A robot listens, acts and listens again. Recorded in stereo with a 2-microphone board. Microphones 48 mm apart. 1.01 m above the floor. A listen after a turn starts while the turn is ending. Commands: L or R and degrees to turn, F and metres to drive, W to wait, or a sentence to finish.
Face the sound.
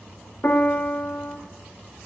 L50
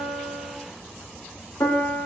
L80
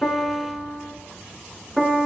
Facing the piano, 1 to 2 m away.